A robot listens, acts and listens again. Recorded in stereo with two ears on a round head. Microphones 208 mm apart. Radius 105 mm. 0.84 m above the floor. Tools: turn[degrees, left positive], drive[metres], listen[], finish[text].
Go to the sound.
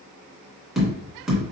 Action: turn[30]
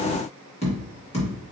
Thought: So it is at 150° left.
Action: turn[150]
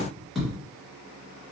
Action: drive[1.0]
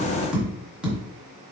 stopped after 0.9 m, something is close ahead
Action: finish[Arrived at the tapping, straight ahead.]